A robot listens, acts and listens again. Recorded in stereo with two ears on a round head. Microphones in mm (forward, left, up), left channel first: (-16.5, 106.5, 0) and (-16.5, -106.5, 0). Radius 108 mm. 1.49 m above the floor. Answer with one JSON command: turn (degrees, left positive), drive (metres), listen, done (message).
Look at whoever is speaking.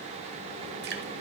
{"listen": true}
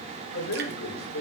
{"turn": 70}
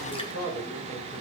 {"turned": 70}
{"turn": 40}
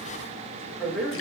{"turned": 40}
{"done": "Facing the man speaking, over 4 m away."}